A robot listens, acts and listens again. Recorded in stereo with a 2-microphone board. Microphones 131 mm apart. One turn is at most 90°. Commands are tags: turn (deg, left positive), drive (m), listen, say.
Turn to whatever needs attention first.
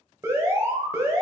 <turn deg="-20"/>
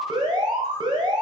<turn deg="-90"/>
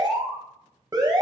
<turn deg="-35"/>
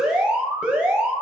<turn deg="-10"/>
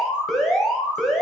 <say>Found it: an alarm, straight ahead, 1 to 2 m away.</say>